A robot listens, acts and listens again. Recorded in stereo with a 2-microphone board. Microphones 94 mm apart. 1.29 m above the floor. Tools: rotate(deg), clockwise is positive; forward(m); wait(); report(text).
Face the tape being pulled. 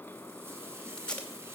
rotate(-30)
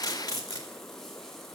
rotate(-140)
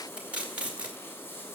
rotate(10)
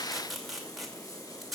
report("Found it: tape being pulled, straight ahead, 2 to 4 m away.")